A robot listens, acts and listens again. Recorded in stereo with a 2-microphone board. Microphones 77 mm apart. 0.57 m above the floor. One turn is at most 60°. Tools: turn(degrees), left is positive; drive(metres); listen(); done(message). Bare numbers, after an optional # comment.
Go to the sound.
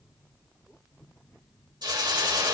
# The hiss: about 70° right or 110° right.
turn(-60)
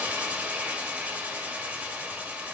# So it is at 20° right.
turn(-20)
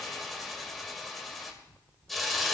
drive(1.0)
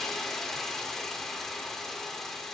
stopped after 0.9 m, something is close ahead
done("Arrived at the hiss, straight ahead.")